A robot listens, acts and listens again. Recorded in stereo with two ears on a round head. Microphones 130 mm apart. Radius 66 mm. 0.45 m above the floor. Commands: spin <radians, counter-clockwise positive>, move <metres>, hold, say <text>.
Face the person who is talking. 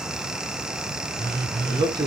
spin -0.52
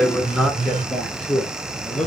say Found it: a man speaking, straight ahead, over 4 m away.